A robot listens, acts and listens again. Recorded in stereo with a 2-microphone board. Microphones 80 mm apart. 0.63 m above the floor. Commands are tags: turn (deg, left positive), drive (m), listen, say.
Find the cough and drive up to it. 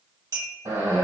<turn deg="-60"/>
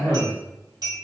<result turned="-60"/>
<turn deg="-20"/>
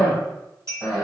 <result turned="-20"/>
<drive m="1.0"/>
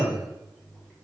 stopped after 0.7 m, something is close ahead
<say>Arrived at the cough, straight ahead.</say>